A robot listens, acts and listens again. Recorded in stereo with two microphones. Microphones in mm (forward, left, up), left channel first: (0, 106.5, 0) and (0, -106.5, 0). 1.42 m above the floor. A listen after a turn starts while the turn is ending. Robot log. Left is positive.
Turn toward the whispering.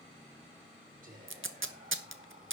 note: The whispering: about 35° right or 145° right.
cmd yaw -35
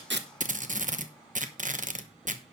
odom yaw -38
cmd idle
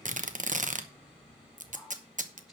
end: Facing the whispering.